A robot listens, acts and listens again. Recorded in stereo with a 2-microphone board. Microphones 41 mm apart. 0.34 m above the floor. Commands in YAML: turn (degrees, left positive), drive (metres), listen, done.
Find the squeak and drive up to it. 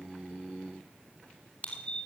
turn: 35
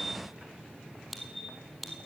drive: 1.0
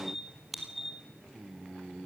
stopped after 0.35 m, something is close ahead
done: "Blocked. The squeak is further on, straight ahead."